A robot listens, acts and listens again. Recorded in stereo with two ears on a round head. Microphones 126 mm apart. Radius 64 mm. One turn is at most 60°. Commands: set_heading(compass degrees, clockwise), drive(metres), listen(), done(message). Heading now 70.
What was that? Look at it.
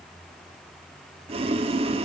set_heading(115)
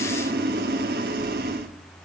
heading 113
set_heading(173)
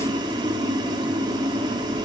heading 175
set_heading(205)
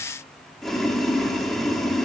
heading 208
done("Found it: boiling, straight ahead, 1 to 2 m away.")